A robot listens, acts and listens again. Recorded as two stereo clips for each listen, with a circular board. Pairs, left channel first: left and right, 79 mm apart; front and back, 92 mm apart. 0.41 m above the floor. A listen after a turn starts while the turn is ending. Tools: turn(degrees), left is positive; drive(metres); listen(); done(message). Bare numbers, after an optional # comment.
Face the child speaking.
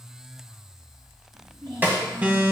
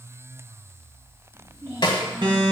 # The child speaking: 120° right.
turn(-120)
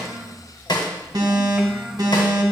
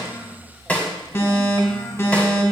listen()
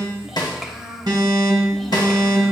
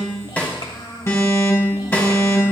done("Found it: a child speaking, straight ahead, 1 to 2 m away.")